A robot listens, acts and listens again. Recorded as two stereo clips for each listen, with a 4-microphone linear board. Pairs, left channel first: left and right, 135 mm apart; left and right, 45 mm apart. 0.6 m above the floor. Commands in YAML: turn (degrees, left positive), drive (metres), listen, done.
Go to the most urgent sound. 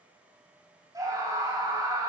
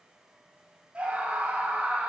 turn: -25
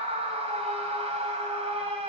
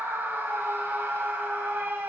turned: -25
turn: -130
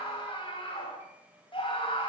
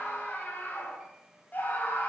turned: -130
turn: 40
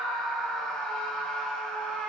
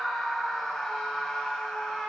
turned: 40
drive: 1.0
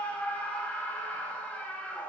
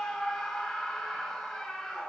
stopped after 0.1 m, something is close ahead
turn: 10
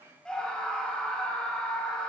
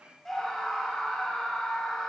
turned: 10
done: "Blocked. The scream is further on, straight ahead."